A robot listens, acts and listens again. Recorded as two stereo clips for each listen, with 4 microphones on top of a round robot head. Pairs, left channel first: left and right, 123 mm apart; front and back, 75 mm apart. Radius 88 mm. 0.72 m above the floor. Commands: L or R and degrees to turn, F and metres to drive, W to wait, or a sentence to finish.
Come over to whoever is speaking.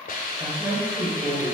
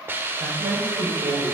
R175
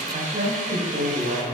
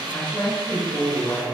R65
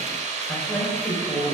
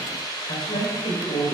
L10
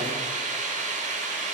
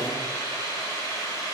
W
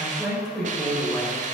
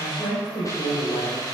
F1.0
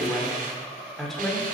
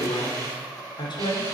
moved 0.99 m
F1.0
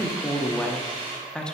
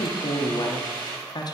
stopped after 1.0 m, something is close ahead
L10
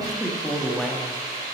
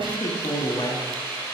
Arrived at the woman speaking, straight ahead.